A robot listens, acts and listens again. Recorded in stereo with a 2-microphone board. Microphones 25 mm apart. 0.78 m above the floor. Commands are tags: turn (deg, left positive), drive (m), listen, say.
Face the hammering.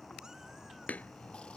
<turn deg="90"/>
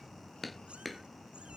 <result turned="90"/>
<say>Found it: hammering, straight ahead.</say>